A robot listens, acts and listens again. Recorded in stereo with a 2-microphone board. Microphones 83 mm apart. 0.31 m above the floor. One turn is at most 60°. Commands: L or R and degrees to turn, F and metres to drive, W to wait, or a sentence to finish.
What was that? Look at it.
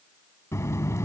L35
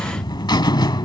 L60
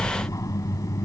L50
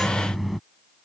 Found it: a buzzer, straight ahead.